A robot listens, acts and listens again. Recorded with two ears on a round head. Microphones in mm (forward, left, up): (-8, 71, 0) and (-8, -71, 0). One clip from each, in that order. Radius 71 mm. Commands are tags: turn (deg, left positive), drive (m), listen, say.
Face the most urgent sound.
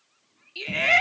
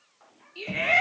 <turn deg="70"/>
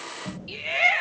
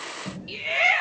<say>Facing the shout, 2 to 4 m away.</say>